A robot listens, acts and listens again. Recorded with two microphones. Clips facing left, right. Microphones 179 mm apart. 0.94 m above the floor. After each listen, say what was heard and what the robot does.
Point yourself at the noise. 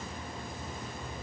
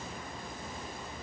Keep listening.
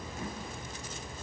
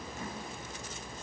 Keep listening.
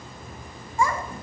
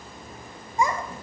The child speaking: about 20° right or 160° right. Turn 20° right.
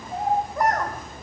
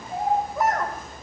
Turn 30° left.
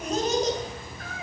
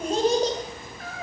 So it is at 35° right. Turn 35° right.
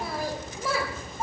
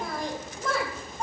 Found it: a child speaking, straight ahead.